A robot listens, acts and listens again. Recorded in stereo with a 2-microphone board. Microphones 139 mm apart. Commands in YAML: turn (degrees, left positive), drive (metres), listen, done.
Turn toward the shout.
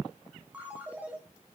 listen: true
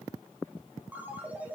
listen: true
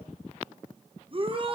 turn: -40
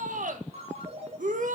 turn: -100
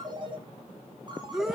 done: "Facing the shout."